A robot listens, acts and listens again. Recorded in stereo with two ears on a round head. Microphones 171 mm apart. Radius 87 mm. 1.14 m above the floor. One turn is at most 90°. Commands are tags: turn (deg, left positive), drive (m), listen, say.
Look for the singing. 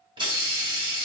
<listen/>
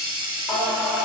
<turn deg="-30"/>
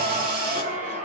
<turn deg="-90"/>
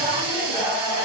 <turn deg="-10"/>
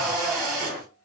<say>Found it: singing, straight ahead.</say>